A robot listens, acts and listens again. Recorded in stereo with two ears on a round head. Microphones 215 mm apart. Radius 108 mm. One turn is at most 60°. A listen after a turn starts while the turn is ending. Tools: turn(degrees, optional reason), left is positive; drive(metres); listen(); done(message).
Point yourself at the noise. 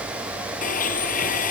turn(degrees=35, reason="The blender: about 35° left or 145° left.")
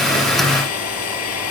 turn(degrees=60, reason="So it is at 110° left.")
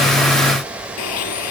turn(degrees=60, reason="The blender is now 75° left.")
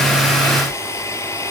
turn(degrees=10, reason="The blender is now 10° left.")
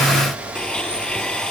done("Facing the blender.")